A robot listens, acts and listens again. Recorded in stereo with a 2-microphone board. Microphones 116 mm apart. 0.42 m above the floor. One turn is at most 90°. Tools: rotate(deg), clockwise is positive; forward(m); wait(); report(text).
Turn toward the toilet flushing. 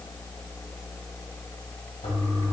rotate(-75)
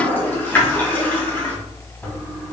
rotate(-15)
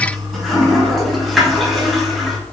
report("Facing the toilet flushing, 1 to 2 m away.")